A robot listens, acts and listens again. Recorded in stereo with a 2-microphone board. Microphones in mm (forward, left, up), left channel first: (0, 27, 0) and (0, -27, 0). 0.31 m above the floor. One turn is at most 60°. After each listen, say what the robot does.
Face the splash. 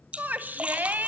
Turn 25° right.
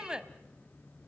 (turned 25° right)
Keep listening.
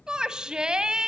I heard a splash, but can't make it out now. It was about straight ahead or 130° right.